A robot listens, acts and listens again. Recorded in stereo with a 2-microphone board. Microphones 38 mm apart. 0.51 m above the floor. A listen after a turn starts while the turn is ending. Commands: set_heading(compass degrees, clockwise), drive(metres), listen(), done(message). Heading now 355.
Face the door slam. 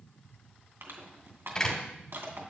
set_heading(335)
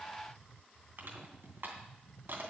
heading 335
listen()
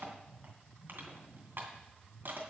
done("I heard a door slam, but can't make it out now. It was about straight ahead or 140° left.")